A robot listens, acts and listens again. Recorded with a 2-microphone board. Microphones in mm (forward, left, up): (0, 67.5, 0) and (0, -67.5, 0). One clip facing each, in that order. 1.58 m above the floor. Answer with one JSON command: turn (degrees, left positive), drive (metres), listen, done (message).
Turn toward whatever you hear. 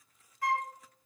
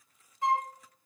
{"turn": -25}
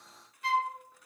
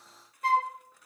{"turn": -130}
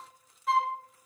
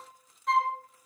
{"done": "Found it: a flute, straight ahead."}